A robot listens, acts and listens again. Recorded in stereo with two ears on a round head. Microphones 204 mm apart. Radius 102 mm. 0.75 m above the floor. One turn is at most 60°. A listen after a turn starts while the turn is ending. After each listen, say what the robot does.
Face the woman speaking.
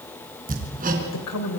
Turn 60° left.
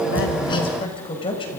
Turn 20° left.
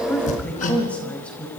Facing the woman speaking, over 4 m away.